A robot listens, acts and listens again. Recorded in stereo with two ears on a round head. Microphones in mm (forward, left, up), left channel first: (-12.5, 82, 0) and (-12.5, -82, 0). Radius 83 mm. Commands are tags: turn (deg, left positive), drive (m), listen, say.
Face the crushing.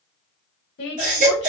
<listen/>
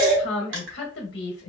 <turn deg="-70"/>
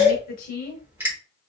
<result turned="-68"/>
<turn deg="-10"/>
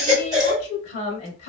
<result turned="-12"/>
<listen/>
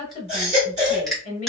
<say>Facing the crushing, 1 to 2 m away.</say>